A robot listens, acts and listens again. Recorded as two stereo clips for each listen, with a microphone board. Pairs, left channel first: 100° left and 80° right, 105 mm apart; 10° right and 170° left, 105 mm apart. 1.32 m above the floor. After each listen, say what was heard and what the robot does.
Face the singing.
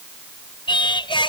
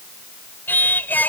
The singing: 60° left. Turn 60° left.
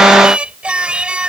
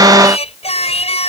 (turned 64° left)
Found it: singing, straight ahead.